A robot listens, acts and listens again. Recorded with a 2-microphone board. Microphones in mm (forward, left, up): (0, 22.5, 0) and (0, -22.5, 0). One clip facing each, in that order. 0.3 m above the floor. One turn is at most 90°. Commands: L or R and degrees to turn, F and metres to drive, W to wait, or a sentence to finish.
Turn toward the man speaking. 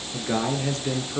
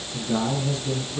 L70
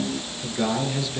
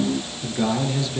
Found it: a man speaking, straight ahead, over 4 m away.